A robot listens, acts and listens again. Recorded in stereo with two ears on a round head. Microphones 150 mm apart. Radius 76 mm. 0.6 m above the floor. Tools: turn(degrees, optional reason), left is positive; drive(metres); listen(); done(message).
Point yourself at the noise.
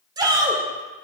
turn(degrees=-25, reason="The shout: about 25° right or 155° right.")
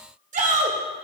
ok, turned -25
turn(degrees=-125, reason="So it is at 125° right.")
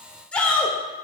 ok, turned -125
done("Facing the shout, 1 to 2 m away.")